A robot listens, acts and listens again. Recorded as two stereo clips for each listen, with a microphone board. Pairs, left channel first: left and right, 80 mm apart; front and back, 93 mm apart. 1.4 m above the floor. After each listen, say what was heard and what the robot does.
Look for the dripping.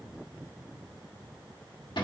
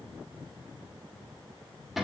Keep listening.
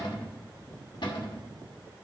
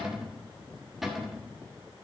Keep listening.
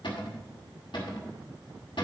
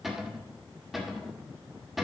I can't make out dripping, only a cupboard door.